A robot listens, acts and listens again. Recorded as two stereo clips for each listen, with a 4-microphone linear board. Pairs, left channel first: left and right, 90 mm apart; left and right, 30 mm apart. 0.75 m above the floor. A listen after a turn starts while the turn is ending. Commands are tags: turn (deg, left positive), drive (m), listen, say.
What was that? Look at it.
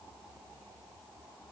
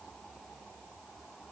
<listen/>
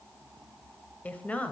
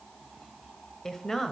<turn deg="15"/>
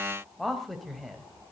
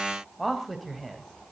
<turn deg="30"/>
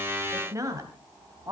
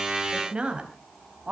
<turn deg="-35"/>
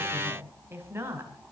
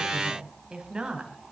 <turn deg="-25"/>
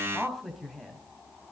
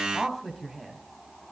<say>Found it: a woman speaking, straight ahead.</say>